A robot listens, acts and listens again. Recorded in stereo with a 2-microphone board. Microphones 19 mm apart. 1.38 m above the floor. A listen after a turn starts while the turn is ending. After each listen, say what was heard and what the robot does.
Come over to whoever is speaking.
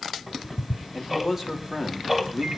The man speaking: about 25° right or 155° right. Turn 25° right.
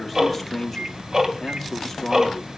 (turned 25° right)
Drive 1.0 m forward.
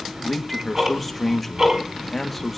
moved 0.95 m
Drive 1.0 m forward.
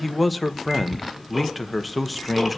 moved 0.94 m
Drive 1.0 m forward.
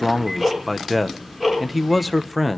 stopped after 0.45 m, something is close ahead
The man speaking is now 10° right. Turn 10° right.
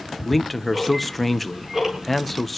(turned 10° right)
I am next to the man speaking.